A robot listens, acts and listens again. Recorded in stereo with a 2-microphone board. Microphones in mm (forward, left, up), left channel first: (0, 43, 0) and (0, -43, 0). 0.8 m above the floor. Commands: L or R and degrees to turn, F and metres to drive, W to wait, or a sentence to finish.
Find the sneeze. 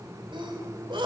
R70
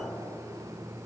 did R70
W
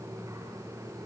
I heard a sneeze, but can't make it out now. It was about straight ahead or 40° right.